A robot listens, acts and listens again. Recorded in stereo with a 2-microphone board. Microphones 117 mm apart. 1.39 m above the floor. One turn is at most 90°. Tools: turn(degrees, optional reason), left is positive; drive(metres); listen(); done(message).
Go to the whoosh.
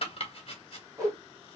turn(degrees=-25, reason="The whoosh: about 25° right or 155° right.")
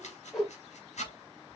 drive(metres=1.0)
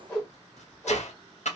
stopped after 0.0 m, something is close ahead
turn(degrees=10, reason="The whoosh is now 10° left.")
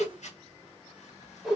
done("Something is in my way. I am facing the whoosh but have not reached it.")